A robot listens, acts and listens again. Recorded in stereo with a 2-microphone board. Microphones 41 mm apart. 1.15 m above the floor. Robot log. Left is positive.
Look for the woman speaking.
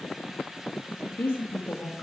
note: The woman speaking: about 70° left or 110° left.
cmd yaw +70
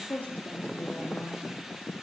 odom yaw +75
note: So it is at 55° left.
cmd yaw +55
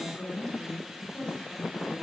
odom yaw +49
note: The woman speaking is now 15° left.
cmd yaw +15
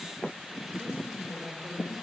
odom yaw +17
end: Facing the woman speaking, over 4 m away.